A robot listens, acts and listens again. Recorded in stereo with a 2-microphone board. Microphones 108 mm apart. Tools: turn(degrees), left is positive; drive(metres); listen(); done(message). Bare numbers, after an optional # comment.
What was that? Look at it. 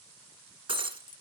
# The breaking glass: about 50° right or 130° right.
turn(-50)
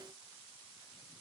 listen()
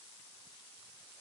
done("I heard breaking glass, but can't make it out now. It was about straight ahead or 80° right.")